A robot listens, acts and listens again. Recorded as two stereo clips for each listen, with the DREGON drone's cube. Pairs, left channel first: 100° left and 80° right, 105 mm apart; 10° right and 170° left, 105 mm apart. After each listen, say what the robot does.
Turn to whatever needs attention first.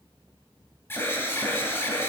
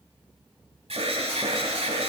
Turn 165° left.
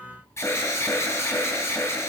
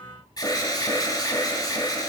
Turn 40° left.
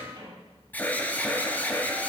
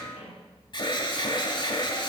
Turn 30° left.
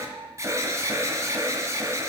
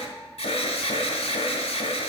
Turn 20° right.
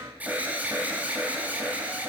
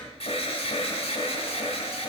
Found it: an alarm, straight ahead, 1 to 2 m away.